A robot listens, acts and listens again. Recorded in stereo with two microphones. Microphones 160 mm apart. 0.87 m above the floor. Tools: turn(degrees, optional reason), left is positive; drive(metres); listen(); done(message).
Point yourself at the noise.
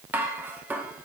turn(degrees=-30)
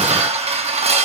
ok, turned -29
turn(degrees=-140, reason="So it is at 140° right.")
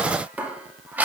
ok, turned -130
turn(degrees=-10, reason="The dishes clattering is now 10° right.")
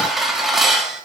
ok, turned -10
done("Found it: dishes clattering, straight ahead.")